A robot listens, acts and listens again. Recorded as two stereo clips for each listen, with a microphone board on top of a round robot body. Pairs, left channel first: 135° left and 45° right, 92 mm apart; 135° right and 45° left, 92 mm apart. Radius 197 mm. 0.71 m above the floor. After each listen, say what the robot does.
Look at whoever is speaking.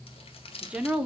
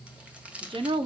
Turn 30° left.
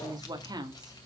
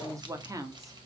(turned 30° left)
Facing the woman speaking, 2 to 4 m away.